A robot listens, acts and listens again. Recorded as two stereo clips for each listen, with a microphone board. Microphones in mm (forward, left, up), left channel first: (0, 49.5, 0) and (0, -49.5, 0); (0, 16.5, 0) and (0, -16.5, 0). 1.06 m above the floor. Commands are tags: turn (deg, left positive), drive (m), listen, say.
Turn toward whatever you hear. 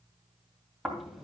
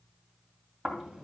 <turn deg="30"/>
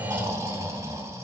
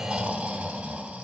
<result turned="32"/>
<turn deg="-30"/>
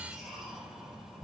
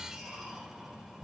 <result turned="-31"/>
<say>Found it: snoring, straight ahead.</say>